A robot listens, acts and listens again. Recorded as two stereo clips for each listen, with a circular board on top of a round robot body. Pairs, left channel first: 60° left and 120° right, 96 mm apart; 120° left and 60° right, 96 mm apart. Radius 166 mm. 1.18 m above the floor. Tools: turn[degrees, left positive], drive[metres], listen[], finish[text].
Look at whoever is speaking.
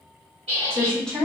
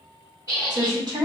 Thought: The woman speaking: 20° right.
Action: turn[-20]
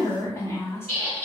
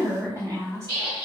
Action: finish[Facing the woman speaking.]